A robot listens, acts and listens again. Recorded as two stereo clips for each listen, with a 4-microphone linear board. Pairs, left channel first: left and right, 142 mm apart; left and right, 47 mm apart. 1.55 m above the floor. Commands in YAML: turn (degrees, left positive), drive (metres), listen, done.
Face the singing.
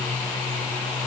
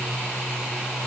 listen: true
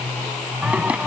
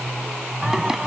turn: -30
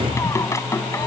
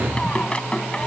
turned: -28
turn: 20
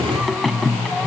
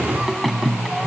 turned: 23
done: "Facing the singing."